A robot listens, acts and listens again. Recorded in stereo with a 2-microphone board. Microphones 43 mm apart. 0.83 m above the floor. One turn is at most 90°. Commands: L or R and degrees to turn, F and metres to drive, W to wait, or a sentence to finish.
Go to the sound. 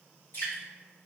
L65
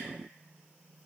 W
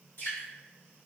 L50
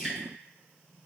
R10
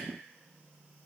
W
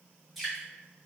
F1.0
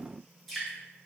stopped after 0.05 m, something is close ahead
Blocked. The dripping is further on, straight ahead.